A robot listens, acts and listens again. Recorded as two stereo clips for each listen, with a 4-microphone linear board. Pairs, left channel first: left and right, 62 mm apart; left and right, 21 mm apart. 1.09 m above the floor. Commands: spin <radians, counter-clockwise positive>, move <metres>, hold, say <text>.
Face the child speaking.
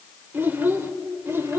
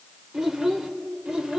spin -0.70
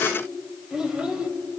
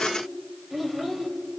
spin -0.17
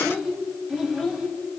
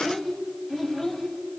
say Facing the child speaking, 2 to 4 m away.